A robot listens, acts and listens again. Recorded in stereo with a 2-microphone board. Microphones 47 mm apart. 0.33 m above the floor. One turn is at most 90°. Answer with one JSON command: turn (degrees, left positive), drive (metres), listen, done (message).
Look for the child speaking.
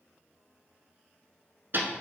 {"listen": true}
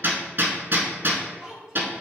{"turn": -30}
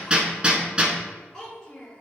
{"turn": 15}
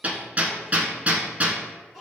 {"done": "Facing the child speaking, 2 to 4 m away."}